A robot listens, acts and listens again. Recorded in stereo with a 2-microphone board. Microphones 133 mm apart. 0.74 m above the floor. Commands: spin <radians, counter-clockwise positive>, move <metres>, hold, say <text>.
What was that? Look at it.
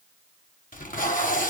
spin 1.57
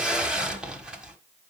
say Found it: tape being pulled, straight ahead, 1 to 2 m away.